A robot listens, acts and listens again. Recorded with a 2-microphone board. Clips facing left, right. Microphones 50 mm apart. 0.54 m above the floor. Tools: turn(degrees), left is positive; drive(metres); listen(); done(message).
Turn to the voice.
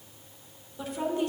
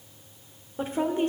turn(degrees=-35)
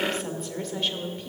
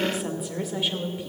turn(degrees=-10)
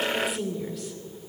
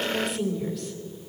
done("Found it: a woman speaking, straight ahead.")